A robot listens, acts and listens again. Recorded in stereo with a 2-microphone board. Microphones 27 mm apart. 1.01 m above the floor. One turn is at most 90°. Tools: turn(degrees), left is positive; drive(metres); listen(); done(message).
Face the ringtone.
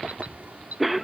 listen()
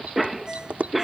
turn(degrees=-20)
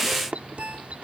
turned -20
turn(degrees=-90)
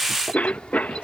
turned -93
turn(degrees=-45)
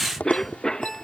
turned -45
done("Found it: a ringtone, straight ahead.")